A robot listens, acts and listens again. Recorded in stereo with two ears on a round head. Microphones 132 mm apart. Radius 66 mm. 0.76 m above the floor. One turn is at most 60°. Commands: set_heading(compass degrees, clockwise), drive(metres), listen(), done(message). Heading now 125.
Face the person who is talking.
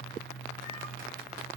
listen()
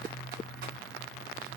listen()
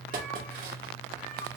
done("I can't make out anyone speaking to turn to.")